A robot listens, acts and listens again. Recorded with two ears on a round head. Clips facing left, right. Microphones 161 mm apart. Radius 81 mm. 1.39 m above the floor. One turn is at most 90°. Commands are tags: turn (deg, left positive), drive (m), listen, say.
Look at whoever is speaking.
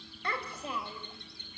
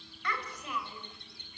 <turn deg="25"/>
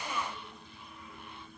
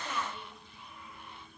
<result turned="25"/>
<listen/>
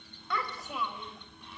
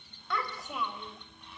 <say>Facing the child speaking, 2 to 4 m away.</say>